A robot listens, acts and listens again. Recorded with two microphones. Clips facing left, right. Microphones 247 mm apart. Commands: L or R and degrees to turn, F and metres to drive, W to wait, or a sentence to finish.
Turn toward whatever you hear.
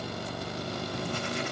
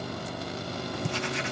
R90
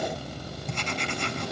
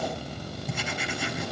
Facing the writing, under 1 m away.